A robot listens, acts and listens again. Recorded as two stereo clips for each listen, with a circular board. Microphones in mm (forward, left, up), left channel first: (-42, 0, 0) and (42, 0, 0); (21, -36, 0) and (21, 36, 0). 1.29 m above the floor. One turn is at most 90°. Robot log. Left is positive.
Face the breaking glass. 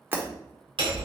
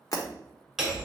note: The breaking glass: 65° right.
cmd yaw -65
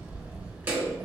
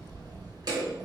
end: Facing where the breaking glass came from. I can't hear it now.